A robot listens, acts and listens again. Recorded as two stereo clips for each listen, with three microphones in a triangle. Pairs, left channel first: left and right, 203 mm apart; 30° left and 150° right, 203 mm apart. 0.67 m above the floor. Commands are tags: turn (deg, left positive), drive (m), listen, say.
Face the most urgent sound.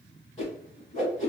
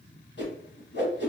<listen/>
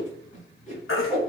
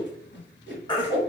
<turn deg="95"/>
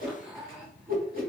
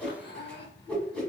<listen/>
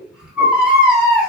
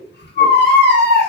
<say>Facing the baby crying.</say>